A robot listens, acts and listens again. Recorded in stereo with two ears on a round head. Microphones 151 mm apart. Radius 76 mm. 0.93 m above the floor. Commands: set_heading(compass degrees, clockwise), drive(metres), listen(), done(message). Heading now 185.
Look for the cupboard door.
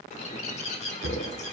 set_heading(275)
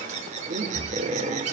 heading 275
set_heading(285)
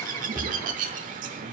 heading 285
done("Facing the cupboard door.")